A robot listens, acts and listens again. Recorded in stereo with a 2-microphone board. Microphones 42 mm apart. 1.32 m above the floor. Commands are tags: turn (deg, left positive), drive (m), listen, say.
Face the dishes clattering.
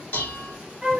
<turn deg="60"/>
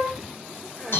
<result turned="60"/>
<turn deg="60"/>
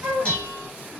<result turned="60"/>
<turn deg="20"/>
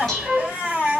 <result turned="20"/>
<say>Facing the dishes clattering, 1 to 2 m away.</say>